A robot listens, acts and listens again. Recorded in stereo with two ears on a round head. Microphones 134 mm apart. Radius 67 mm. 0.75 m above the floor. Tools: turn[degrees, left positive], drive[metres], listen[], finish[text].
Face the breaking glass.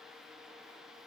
Action: listen[]
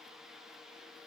Action: listen[]
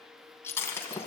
Thought: The breaking glass: about 20° left or 160° left.
Action: turn[20]
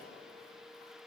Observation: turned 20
Action: listen[]
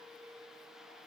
Action: finish[I heard breaking glass, but can't make it out now. It was about straight ahead or 140° left.]